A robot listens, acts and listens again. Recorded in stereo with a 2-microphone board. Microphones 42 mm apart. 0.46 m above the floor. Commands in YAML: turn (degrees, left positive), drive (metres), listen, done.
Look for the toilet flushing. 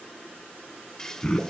turn: 30
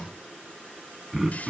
listen: true
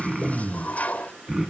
turn: 135
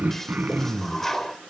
turn: 10
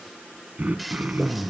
done: "Facing the toilet flushing, under 1 m away."